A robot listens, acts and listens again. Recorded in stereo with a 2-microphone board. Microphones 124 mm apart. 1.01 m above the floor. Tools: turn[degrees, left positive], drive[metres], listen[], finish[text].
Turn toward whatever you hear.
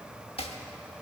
Thought: The chopping: about 50° left or 130° left.
Action: turn[50]
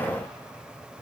Action: listen[]
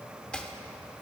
Thought: So it is at 10° left.
Action: turn[10]
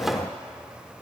Action: listen[]
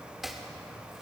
Action: finish[Facing the chopping.]